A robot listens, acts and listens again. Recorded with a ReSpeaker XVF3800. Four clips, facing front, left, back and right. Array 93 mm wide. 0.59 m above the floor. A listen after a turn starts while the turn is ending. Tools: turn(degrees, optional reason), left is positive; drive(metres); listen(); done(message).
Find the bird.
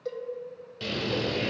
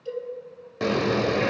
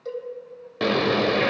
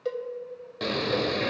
turn(degrees=160, reason="The bird: 160° left.")
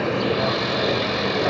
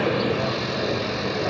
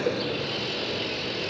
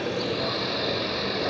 turn(degrees=10, reason="The bird is now 10° left.")
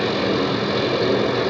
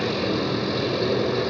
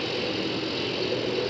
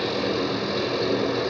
done("Found it: a bird, straight ahead, under 1 m away.")